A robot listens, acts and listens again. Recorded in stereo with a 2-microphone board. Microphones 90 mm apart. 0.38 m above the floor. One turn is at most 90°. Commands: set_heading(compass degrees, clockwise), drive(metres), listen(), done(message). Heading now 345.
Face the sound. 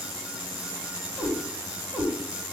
set_heading(75)
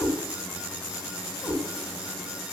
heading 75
set_heading(60)
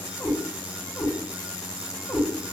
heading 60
done("Found it: a cat meowing, straight ahead.")